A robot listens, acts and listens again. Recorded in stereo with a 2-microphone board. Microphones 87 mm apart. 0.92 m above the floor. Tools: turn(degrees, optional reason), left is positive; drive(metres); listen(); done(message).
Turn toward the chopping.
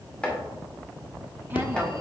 turn(degrees=30)
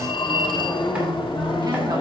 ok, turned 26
listen()
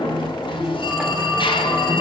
listen()
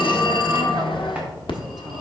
done("I heard chopping, but can't make it out now. It was about 10° right or 140° left.")